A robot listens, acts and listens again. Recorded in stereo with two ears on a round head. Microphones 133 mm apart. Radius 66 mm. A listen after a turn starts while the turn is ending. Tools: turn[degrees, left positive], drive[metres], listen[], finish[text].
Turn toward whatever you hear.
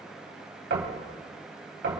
Thought: The knocking: about 75° right or 105° right.
Action: turn[-75]
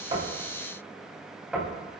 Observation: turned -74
Action: finish[Found it: knocking, straight ahead, 2 to 4 m away.]